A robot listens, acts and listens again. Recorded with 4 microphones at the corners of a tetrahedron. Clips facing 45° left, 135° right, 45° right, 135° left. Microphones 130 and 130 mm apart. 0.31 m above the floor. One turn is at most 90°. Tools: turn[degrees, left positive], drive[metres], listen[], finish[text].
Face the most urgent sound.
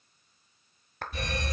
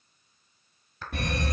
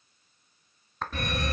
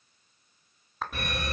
Thought: The fire alarm: 150° right.
Action: turn[-90]
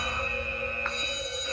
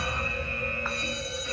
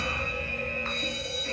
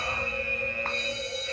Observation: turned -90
Thought: The fire alarm is now 50° right.
Action: turn[-50]
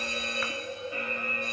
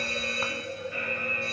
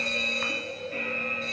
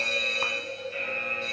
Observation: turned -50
Thought: The fire alarm is now 25° right.
Action: turn[-25]
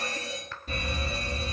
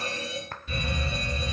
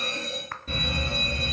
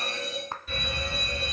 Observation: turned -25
Action: finish[Found it: a fire alarm, straight ahead.]